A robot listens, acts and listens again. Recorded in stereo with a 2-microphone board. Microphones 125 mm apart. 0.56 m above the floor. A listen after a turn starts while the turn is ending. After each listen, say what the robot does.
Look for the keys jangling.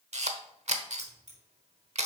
Turn 70° right.
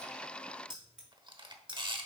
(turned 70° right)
Turn 10° right.
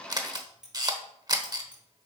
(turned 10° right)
Turn 10° right.
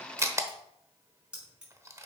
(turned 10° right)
Turn 10° right.
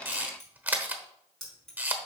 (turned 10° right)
Facing the keys jangling.